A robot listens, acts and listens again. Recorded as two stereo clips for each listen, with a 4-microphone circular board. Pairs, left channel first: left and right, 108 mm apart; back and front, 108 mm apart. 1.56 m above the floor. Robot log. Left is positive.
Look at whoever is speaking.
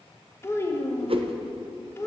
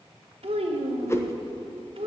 note: The child speaking: 25° left.
cmd yaw +25
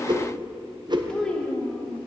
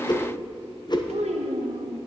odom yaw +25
note: The child speaking is now 10° left.
cmd yaw +10
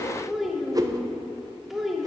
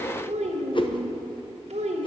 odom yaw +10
end: Facing the child speaking.